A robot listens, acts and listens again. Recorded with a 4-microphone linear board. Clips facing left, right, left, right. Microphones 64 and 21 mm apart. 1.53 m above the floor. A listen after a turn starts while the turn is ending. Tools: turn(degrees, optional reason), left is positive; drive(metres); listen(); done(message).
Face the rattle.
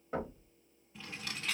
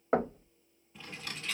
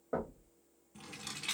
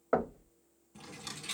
turn(degrees=90)
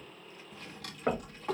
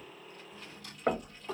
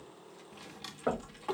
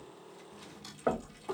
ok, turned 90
listen()
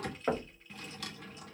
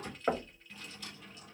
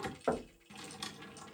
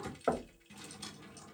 listen()
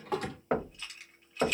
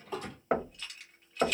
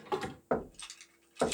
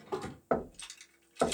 done("I heard a rattle from this way, but can't make it out now.")